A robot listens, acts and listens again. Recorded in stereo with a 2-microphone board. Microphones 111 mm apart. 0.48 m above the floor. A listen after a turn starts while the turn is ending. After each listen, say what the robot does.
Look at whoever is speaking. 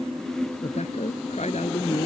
Turn 90° left.
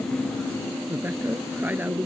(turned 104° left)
Turn 15° right.
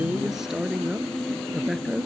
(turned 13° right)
Found it: a woman speaking, straight ahead.